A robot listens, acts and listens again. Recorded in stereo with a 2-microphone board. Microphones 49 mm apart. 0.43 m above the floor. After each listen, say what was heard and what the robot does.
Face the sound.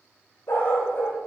The dog barking: about 50° left or 130° left. Turn 50° left.
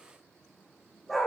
Found it: a dog barking, straight ahead.